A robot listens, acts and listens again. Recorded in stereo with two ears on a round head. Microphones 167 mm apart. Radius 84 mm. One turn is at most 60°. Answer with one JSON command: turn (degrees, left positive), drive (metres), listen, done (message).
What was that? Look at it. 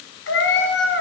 {"turn": 60}
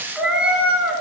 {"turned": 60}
{"turn": -10}
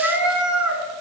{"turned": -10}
{"turn": -10}
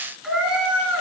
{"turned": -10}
{"turn": -10}
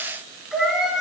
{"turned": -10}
{"done": "Found it: a cat meowing, straight ahead."}